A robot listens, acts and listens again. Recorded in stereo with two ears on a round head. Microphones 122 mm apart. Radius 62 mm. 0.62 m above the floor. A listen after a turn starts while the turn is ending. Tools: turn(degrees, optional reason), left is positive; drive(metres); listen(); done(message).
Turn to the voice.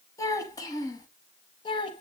turn(degrees=35, reason="The child speaking: about 35° left or 145° left.")
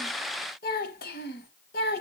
turn(degrees=95, reason="So it is at 95° left.")
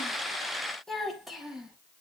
done("Facing the child speaking, 2 to 4 m away.")